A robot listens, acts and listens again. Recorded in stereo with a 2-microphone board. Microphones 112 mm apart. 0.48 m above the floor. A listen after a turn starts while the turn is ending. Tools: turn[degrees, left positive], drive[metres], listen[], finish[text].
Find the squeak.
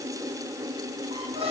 Thought: The squeak: about 65° right or 115° right.
Action: turn[-65]
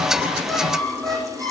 Action: finish[Facing the squeak.]